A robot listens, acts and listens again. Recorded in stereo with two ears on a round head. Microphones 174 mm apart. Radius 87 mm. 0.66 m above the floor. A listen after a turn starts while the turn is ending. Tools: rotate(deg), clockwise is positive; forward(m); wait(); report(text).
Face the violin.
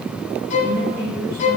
rotate(-40)
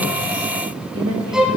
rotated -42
report("Found it: a violin, straight ahead.")